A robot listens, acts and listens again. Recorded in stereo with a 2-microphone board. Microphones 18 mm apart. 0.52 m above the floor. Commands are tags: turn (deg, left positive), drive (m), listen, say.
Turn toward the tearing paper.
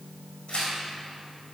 <turn deg="70"/>
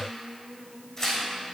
<turn deg="35"/>
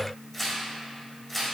<turn deg="10"/>
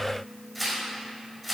<say>Found it: tearing paper, straight ahead, 1 to 2 m away.</say>